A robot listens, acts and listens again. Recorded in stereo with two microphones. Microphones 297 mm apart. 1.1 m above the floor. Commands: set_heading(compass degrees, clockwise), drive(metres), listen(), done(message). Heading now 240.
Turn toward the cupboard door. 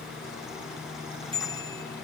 listen()
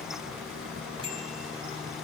listen()
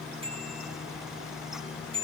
done("I can't make out a cupboard door to turn to.")